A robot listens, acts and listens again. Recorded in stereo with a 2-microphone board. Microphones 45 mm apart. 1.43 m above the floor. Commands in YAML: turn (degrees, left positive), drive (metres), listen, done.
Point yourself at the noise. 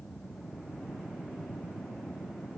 listen: true
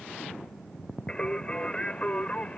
turn: 30
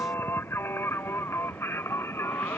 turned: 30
turn: 115
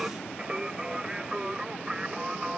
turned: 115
turn: -20
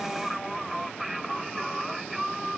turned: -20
done: "Found it: singing, straight ahead."